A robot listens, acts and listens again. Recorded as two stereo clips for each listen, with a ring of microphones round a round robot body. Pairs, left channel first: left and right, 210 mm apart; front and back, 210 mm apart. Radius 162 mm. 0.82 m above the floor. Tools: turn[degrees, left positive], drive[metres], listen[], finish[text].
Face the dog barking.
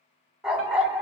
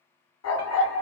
Action: finish[Facing the dog barking.]